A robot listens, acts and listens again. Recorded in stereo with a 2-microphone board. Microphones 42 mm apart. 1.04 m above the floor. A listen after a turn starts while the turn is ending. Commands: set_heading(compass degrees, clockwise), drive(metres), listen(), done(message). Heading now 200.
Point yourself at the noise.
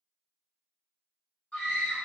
set_heading(175)
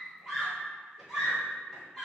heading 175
done("Facing the scream, 1 to 2 m away.")